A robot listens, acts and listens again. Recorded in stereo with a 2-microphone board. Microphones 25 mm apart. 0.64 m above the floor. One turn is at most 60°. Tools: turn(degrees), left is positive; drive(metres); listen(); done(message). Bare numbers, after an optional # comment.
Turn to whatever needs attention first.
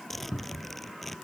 listen()
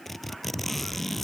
listen()
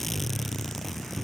done("I can't make out anything urgent, only a cupboard door and a zipper.")